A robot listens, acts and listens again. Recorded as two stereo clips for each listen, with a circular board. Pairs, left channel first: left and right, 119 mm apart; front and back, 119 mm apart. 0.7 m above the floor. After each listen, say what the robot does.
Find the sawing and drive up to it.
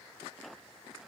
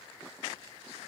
Keep listening.
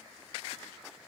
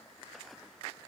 Keep listening.
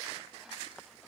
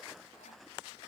I can't make out sawing.